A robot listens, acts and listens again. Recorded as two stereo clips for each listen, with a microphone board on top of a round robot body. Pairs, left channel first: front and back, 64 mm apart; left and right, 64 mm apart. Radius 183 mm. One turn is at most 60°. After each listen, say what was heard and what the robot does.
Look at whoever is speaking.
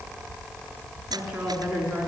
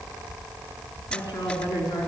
The woman speaking: 105° left. Turn 60° left.
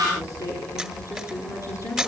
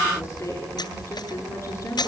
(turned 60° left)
The woman speaking is now 40° left. Turn 40° left.
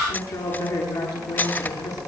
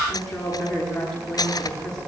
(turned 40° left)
The woman speaking is now 10° left. Turn 10° left.
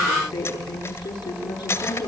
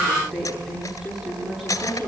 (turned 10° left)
Facing the woman speaking, over 4 m away.